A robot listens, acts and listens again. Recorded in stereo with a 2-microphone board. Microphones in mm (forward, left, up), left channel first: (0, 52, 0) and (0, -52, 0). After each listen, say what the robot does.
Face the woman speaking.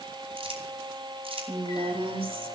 Turn 60° right.
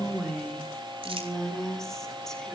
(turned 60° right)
Facing the woman speaking, over 4 m away.